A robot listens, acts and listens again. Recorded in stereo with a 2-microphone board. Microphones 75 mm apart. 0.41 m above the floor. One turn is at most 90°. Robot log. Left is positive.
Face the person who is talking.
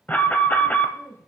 note: The woman speaking: about 25° left or 155° left.
cmd yaw +25
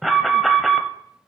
cmd idle
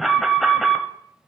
cmd idle
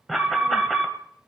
end: I heard a woman speaking, but can't make it out now. It was about straight ahead or 130° left.